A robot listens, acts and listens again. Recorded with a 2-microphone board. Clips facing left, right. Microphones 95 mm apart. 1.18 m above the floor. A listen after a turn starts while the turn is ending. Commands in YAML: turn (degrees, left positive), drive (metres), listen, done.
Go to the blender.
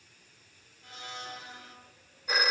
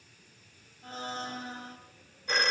turn: -35
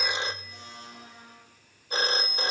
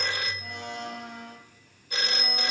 turn: -105
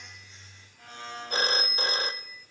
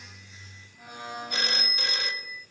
turn: -15
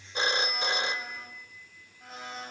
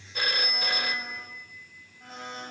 drive: 1.0
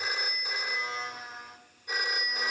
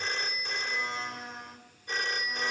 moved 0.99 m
drive: 1.0
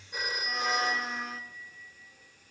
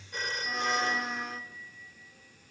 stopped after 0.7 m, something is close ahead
done: "I am next to the blender."